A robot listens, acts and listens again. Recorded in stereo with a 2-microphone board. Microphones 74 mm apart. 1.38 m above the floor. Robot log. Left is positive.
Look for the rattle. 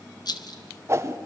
note: The rattle: about 65° left or 115° left.
cmd yaw +65
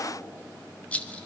note: So it is at 20° left.
cmd yaw +20
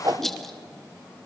end: Facing the rattle, 1 to 2 m away.